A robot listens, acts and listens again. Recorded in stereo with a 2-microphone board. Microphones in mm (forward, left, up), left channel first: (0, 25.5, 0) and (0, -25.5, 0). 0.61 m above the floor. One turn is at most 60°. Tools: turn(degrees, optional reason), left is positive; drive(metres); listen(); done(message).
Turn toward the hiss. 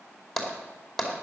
listen()
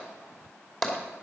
listen()
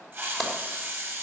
turn(degrees=-45, reason="The hiss: about 45° right or 135° right.")
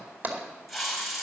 done("Found it: a hiss, straight ahead, over 4 m away.")